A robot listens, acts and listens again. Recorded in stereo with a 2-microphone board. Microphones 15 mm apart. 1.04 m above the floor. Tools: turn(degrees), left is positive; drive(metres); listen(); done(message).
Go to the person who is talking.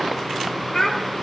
turn(degrees=45)
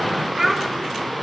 drive(metres=1.0)
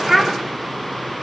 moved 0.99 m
drive(metres=1.0)
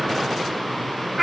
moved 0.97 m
drive(metres=1.0)
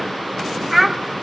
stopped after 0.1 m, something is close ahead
done("I am next to the child speaking.")